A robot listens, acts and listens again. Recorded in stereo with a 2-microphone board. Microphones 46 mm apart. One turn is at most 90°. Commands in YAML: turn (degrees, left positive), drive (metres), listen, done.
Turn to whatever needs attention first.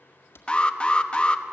turn: 25
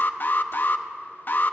turn: 90
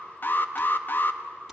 turn: 55
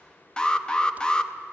turn: 20
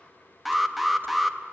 done: "Facing the alarm."